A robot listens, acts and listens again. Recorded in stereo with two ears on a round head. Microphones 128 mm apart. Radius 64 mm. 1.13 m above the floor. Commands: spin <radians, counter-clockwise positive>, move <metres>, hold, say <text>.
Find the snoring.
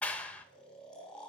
spin 0.52
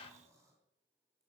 hold
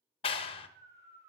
spin -0.44
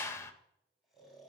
say Facing the snoring.